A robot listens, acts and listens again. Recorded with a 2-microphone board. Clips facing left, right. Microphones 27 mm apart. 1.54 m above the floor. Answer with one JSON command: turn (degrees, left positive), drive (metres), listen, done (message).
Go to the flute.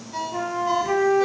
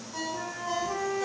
{"turn": 90}
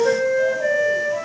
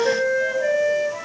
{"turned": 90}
{"drive": 1.0}
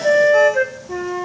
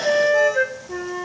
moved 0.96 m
{"turn": 10}
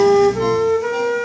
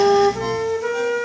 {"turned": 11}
{"drive": 1.0}
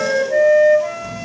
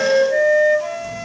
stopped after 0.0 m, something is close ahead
{"done": "I am next to the flute."}